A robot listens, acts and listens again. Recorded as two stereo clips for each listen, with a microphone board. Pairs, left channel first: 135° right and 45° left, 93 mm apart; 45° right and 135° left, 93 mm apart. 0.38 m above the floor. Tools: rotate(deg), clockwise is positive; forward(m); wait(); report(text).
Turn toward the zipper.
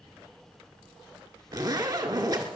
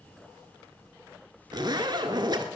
rotate(-90)
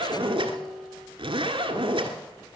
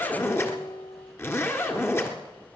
rotate(-20)
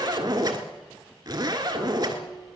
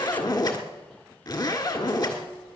report("Facing the zipper, 1 to 2 m away.")